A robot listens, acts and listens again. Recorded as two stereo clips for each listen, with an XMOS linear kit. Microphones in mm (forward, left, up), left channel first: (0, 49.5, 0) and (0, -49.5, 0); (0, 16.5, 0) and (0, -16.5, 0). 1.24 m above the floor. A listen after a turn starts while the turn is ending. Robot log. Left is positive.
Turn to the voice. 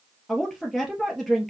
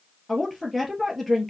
cmd yaw +30
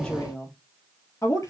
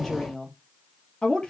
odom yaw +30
note: So it is at 150° left.
cmd yaw +150
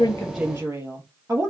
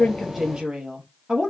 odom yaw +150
note: The woman speaking is now 25° right.
cmd yaw -25
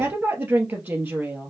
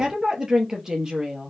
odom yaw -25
note: The woman speaking is now 20° right.
cmd yaw -20
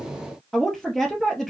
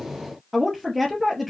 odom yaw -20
end: Facing the woman speaking.